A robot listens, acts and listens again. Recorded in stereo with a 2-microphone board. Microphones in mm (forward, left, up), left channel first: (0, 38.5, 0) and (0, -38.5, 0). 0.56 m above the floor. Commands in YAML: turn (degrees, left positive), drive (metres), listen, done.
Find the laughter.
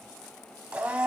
listen: true
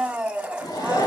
turn: 60
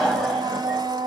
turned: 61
done: "Facing the laughter, 2 to 4 m away."